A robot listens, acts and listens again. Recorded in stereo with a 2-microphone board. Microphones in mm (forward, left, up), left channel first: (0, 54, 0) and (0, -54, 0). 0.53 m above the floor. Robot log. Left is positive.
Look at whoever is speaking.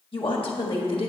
note: The woman speaking: about 60° left or 120° left.
cmd yaw +60
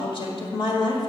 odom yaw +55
note: So it is at 60° left.
cmd yaw +60
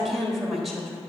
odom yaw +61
end: Facing the woman speaking.